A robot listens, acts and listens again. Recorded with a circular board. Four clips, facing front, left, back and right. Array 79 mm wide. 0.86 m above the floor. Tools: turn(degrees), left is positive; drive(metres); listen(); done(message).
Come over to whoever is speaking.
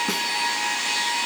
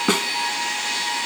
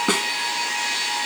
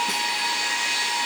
listen()
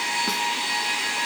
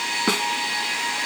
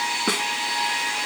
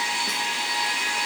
listen()
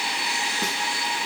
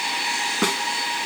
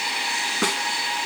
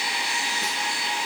done("I can't make out anyone speaking to turn to.")